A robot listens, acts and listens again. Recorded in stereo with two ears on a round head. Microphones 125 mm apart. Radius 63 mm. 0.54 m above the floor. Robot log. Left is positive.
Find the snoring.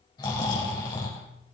note: The snoring: about 30° left or 150° left.
cmd yaw +30
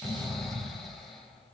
end: Facing the snoring, 2 to 4 m away.